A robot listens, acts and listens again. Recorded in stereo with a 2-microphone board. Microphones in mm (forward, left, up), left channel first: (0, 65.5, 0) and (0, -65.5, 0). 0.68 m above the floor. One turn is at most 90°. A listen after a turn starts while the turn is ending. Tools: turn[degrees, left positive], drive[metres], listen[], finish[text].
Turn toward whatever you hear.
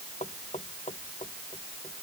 Thought: The knocking: about 60° left or 120° left.
Action: turn[60]
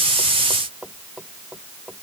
Action: finish[Found it: knocking, straight ahead.]